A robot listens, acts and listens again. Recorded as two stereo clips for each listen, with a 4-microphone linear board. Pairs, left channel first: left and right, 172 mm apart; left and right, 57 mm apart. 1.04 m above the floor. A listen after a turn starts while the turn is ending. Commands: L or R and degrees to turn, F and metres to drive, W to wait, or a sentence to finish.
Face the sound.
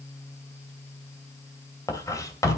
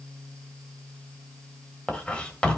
L20
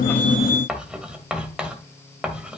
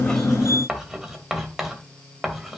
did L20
Found it: writing, straight ahead, 2 to 4 m away.